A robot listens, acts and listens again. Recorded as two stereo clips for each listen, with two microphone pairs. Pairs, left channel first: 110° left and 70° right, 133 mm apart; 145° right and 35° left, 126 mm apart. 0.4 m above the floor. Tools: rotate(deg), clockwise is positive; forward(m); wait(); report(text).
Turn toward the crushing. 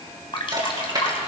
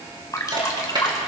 rotate(15)
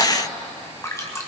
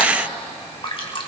wait()
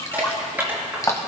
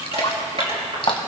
report("Facing the crushing, over 4 m away.")